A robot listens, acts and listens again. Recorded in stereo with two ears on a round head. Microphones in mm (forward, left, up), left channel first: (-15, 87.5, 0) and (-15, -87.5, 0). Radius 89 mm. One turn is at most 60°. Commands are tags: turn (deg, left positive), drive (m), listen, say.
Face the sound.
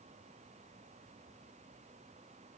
<listen/>
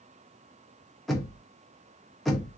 <turn deg="30"/>
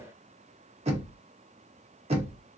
<turn deg="-30"/>
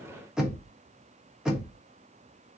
<say>Facing the knocking.</say>